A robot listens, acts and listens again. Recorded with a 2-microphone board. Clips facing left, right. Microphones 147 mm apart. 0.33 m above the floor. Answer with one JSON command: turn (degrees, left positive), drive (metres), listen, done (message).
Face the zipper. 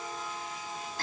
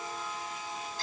{"listen": true}
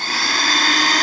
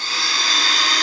{"listen": true}
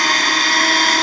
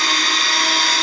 {"done": "I can't make out a zipper, only a blender."}